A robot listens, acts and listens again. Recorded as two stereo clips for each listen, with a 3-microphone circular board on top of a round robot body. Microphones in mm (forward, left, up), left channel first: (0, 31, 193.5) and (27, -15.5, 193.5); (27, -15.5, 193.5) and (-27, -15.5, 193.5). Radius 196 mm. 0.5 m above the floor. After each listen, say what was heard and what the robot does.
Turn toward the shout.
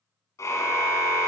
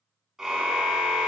Keep listening.
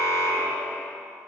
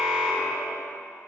Keep listening.
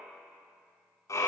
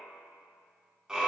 I can't make out a shout to turn to.